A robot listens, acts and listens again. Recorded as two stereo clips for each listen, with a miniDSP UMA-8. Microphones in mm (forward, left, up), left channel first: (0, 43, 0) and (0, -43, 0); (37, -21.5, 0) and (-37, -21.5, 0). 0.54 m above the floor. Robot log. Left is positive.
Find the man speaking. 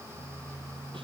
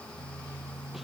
cmd idle
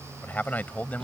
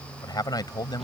note: The man speaking: 20° left.
cmd yaw +20
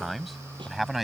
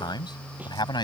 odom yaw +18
end: Facing the man speaking.